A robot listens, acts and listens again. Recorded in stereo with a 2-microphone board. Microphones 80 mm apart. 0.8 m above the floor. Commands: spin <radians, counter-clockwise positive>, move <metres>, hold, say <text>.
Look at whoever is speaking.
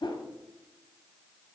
hold
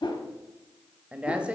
spin -0.52
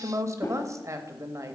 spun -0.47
spin -2.36
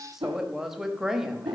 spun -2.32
say Found it: a woman speaking, straight ahead, under 1 m away.